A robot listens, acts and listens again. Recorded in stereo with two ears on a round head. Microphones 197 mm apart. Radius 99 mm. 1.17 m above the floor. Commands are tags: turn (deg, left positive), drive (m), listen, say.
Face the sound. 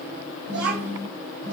<turn deg="-50"/>
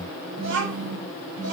<turn deg="-85"/>
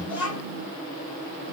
<turn deg="25"/>
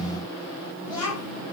<turn deg="15"/>
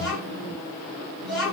<say>Facing the child speaking, over 4 m away.</say>